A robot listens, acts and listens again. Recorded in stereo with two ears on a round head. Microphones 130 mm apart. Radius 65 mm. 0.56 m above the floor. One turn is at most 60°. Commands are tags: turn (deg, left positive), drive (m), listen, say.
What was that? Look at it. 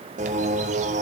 <turn deg="-50"/>
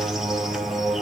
<say>Found it: a bird, straight ahead, 2 to 4 m away.</say>